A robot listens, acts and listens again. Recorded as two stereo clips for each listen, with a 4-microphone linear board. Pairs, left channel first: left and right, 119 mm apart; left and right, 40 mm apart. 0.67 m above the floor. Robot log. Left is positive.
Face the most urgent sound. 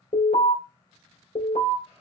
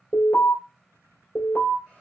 note: The alarm: about 70° left or 110° left.
cmd yaw +70
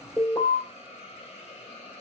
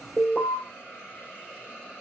note: So it is at 25° left.
cmd yaw +25
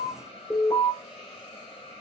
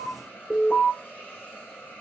note: The alarm is now 15° left.
cmd yaw +15
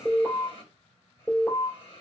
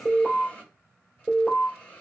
end: Facing the alarm, 2 to 4 m away.